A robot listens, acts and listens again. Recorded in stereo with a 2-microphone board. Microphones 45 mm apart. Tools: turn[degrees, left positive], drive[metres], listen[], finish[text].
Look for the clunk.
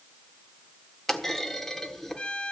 Action: turn[30]
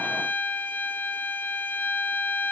Action: listen[]
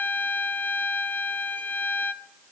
Action: finish[I heard a clunk, but can't make it out now. It was about 25° right or 145° left.]